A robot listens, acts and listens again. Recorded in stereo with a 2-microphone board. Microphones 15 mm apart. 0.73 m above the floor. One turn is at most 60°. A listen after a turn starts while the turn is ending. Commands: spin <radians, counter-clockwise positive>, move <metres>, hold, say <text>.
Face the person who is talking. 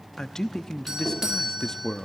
spin 0.87
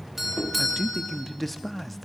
spin 0.17
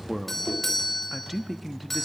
say Found it: a man speaking, straight ahead, under 1 m away.